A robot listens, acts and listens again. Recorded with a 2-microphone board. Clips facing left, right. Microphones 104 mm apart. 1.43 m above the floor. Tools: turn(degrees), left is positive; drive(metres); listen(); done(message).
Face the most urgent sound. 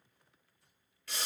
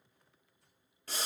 listen()
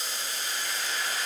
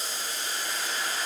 listen()
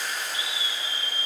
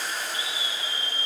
turn(degrees=20)
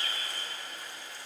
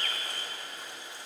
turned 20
turn(degrees=140)
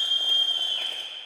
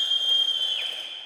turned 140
turn(degrees=35)
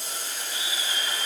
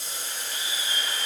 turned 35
listen()
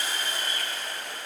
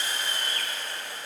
turn(degrees=10)
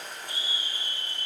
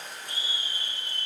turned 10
done("Facing the scream, 2 to 4 m away.")